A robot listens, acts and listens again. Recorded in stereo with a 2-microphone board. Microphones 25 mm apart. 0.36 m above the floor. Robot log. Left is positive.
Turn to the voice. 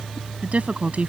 note: The woman speaking: about 65° right or 115° right.
cmd yaw -65
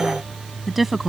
end: Facing the woman speaking.